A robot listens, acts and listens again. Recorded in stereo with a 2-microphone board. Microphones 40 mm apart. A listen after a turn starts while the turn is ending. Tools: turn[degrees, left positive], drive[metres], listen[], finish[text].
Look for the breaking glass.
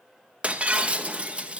Thought: The breaking glass: about 30° right or 150° right.
Action: turn[-30]
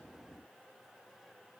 Action: listen[]
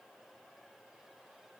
Action: finish[I heard breaking glass, but can't make it out now. It was about straight ahead or 120° right.]